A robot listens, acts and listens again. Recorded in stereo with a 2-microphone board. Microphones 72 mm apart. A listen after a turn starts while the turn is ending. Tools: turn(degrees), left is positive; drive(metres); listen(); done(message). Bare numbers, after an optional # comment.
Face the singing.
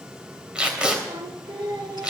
turn(-90)
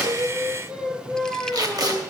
# So it is at 20° right.
turn(-20)
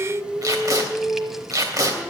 done("Facing the singing, 2 to 4 m away.")